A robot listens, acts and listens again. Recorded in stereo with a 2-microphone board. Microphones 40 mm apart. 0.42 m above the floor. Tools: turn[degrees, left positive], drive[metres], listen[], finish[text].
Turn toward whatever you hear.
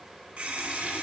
Thought: The running tap: about 40° right or 140° right.
Action: turn[-40]
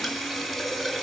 Action: finish[Facing the running tap, 2 to 4 m away.]